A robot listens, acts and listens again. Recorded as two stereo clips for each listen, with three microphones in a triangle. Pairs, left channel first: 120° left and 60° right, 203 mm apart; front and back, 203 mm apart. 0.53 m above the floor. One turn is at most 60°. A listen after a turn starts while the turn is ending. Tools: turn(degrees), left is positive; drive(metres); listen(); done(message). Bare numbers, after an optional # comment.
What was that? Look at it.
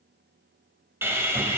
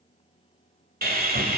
# The sawing: 135° right.
turn(-60)
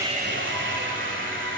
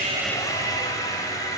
# The sawing is now 75° right.
turn(-60)
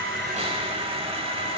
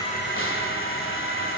done("Found it: sawing, straight ahead, 1 to 2 m away.")